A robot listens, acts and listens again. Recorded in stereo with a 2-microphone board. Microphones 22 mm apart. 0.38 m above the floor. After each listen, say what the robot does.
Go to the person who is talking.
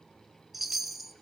Keep listening.
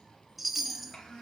Turn 30° left.
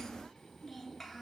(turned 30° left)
Drive 1.0 m forward.
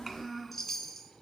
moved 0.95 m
Turn 10° right.
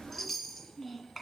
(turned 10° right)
Drive 1.0 m forward.
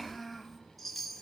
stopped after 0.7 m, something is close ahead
I am next to the child speaking.